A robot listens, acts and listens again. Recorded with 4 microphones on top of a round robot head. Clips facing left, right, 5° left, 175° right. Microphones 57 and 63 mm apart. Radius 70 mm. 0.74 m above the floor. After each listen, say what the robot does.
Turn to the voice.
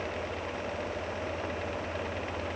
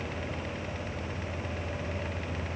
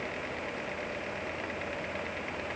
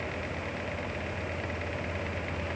Keep listening.
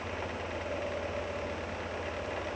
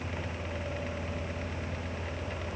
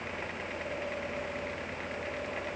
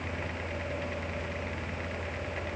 Keep listening.
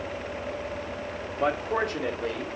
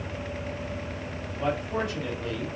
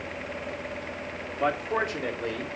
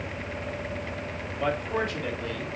Turn 70° left.
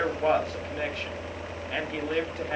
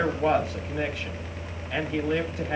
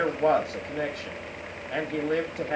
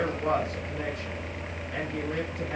Found it: a man speaking, straight ahead, 1 to 2 m away.